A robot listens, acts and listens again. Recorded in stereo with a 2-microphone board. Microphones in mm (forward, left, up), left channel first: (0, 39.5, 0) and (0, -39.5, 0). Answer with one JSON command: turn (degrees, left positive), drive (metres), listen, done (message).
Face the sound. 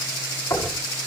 {"turn": 40}
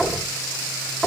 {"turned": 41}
{"done": "Facing the knocking, over 4 m away."}